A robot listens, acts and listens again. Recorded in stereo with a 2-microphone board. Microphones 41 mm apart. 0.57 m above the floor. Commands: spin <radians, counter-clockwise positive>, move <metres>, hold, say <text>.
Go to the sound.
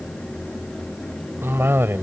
spin -1.31
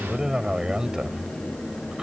spin -0.35
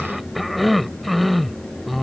move 1.0
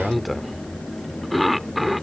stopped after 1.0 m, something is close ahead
say Arrived at the cough, straight ahead.